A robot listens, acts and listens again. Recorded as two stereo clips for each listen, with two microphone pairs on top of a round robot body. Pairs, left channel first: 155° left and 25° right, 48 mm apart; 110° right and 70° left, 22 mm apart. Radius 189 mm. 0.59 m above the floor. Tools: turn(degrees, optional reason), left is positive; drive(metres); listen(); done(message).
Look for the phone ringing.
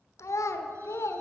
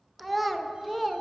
listen()
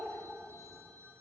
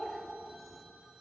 done("Found it: a phone ringing, straight ahead, under 1 m away.")